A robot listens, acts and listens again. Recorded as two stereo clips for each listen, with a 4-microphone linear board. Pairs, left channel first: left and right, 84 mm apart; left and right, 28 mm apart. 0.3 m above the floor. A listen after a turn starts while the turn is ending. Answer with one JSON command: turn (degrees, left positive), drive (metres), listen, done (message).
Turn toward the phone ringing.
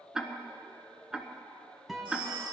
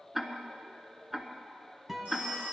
{"turn": -90}
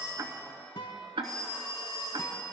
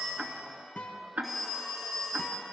{"done": "Facing the phone ringing, over 4 m away."}